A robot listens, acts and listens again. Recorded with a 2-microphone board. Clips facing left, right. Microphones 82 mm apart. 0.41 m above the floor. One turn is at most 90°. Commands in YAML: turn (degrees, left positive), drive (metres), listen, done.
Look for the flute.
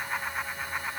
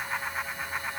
listen: true
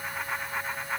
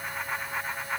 listen: true
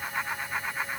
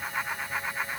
done: "I can't make out a flute to turn to."